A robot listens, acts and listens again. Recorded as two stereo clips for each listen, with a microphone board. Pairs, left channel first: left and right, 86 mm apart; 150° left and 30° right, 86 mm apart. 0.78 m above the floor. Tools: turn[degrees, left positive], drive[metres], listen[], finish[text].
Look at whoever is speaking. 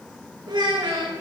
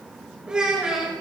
Thought: The child speaking: 110° right.
Action: turn[-110]
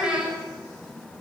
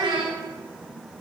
Thought: The child speaking is now 10° right.
Action: turn[-10]
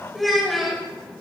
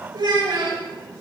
Action: finish[Found it: a child speaking, straight ahead, 1 to 2 m away.]